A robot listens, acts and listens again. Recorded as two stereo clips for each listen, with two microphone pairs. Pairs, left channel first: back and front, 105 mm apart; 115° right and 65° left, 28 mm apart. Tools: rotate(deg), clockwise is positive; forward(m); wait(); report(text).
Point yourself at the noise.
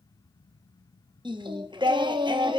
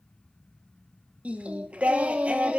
rotate(-35)
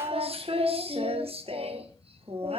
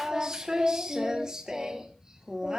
report("Facing the singing.")